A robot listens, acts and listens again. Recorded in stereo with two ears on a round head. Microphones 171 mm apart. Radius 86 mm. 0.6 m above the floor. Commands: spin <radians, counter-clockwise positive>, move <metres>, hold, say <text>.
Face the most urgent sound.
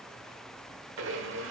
hold
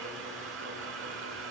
hold
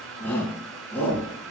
spin 0.52
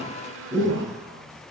spin -0.35
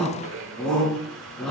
say Found it: a shout, straight ahead, 2 to 4 m away.